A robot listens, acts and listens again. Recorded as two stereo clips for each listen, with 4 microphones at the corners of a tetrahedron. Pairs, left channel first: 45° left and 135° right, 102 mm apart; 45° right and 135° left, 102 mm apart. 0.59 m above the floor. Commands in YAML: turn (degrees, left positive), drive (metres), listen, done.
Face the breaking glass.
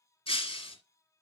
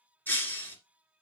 turn: 25
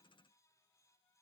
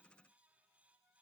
done: "I heard breaking glass from this way, but can't make it out now."